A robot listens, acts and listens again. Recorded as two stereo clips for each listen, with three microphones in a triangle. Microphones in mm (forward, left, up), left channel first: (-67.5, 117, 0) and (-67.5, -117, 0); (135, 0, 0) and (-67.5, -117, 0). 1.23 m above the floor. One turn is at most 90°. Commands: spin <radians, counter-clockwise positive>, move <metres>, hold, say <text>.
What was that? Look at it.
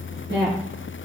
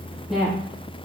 spin -1.05
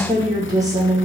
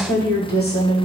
spin -0.26
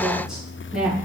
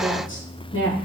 say Facing the woman speaking.